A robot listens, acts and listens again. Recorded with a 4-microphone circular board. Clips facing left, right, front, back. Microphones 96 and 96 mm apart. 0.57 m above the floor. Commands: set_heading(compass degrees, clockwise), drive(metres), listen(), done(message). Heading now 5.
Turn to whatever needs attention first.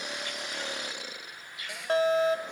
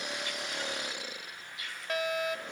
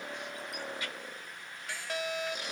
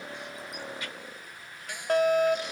set_heading(220)
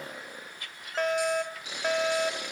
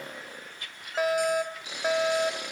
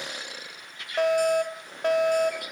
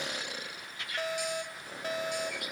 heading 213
set_heading(223)
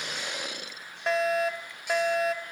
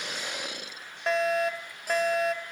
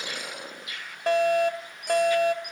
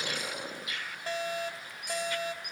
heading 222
done("Facing the fire alarm.")